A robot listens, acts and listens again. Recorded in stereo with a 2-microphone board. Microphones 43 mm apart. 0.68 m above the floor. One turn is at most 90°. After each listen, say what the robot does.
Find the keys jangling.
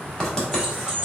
Turn 30° right.
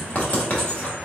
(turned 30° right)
Keep listening.
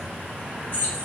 Turn 40° left.
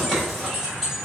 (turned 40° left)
Facing the keys jangling.